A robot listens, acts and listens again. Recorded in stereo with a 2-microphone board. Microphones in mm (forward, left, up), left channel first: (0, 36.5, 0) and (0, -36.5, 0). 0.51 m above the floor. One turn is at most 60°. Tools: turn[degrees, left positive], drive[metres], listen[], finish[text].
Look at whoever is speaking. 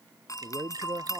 Thought: The man speaking: about 35° right or 145° right.
Action: turn[-35]
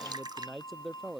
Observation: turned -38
Action: finish[Facing the man speaking.]